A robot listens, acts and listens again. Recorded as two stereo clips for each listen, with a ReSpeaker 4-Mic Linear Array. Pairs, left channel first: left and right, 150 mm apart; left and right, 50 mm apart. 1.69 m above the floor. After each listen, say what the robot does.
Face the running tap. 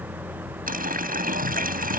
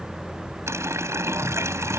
Turn 70° right.
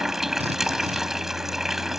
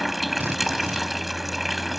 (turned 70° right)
Facing the running tap.